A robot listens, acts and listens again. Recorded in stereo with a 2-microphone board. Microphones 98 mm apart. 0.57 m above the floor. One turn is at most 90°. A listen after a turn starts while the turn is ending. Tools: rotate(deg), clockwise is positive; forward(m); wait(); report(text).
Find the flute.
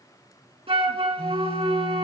rotate(90)
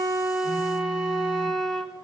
report("Facing the flute, 1 to 2 m away.")